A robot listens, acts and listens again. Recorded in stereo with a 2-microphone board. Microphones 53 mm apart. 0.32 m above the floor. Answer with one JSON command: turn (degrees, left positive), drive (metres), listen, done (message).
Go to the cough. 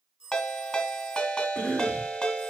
{"turn": 15}
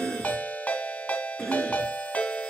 {"drive": 1.0}
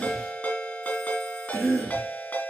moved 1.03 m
{"drive": 1.0}
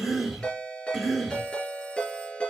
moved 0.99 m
{"turn": -10}
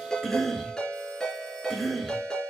{"drive": 1.0}
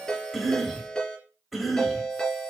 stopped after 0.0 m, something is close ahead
{"done": "I am next to the cough."}